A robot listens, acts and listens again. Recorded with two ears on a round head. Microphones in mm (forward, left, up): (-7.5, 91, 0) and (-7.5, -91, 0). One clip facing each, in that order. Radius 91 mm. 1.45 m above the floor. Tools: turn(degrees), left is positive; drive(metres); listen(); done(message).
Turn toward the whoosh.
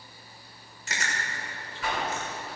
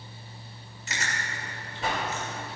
turn(degrees=-25)
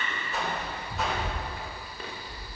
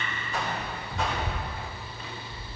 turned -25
done("Found it: a whoosh, straight ahead, 2 to 4 m away.")